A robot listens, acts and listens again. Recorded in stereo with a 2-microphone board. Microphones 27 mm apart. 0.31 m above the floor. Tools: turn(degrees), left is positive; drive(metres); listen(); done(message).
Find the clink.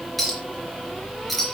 turn(degrees=30)
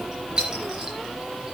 turn(degrees=-30)
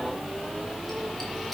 listen()
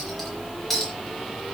done("Facing the clink, 2 to 4 m away.")